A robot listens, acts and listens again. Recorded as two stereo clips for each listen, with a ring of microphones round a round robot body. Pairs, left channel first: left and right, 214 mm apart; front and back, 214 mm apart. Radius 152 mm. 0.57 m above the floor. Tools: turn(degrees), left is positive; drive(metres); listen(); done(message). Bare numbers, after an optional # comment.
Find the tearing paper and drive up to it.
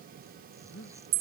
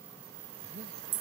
listen()
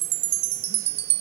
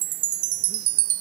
listen()
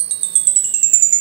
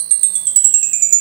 done("I can't make out tearing paper to turn to.")